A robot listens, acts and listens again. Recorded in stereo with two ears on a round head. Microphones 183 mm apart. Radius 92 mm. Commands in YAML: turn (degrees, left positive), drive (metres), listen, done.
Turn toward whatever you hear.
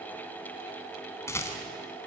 turn: 30
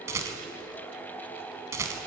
turn: -15
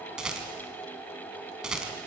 done: "Facing the rattle."